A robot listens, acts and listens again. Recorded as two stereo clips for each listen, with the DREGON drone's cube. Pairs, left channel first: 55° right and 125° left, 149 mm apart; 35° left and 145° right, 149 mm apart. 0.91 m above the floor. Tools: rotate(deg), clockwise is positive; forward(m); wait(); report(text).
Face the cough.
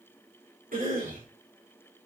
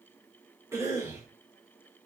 rotate(-145)
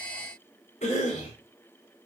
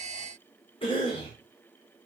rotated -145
rotate(15)
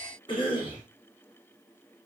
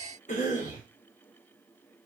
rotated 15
report("Facing the cough, 2 to 4 m away.")